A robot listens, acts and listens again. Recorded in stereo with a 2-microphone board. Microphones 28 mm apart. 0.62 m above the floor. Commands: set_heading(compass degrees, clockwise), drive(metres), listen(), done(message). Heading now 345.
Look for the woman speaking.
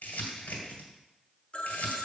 listen()
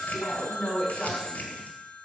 set_heading(325)
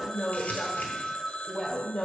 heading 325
set_heading(290)
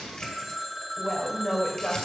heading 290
set_heading(275)
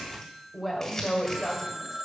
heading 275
done("Facing the woman speaking, 2 to 4 m away.")